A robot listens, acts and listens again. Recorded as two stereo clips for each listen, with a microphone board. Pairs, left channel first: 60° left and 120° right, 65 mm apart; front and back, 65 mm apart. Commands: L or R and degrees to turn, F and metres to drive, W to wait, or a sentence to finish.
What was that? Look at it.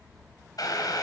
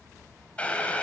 L70
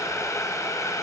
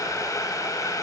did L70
L25
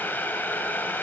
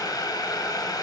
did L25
Found it: boiling, straight ahead, 2 to 4 m away.